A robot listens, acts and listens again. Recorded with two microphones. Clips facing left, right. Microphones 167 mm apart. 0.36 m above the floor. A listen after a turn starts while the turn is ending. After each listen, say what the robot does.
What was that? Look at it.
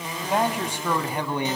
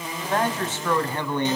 Turn 30° left.
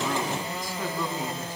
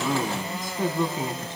Turn 25° right.
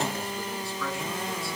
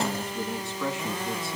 Turn 20° right.
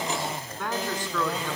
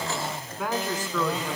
Found it: a man speaking, straight ahead.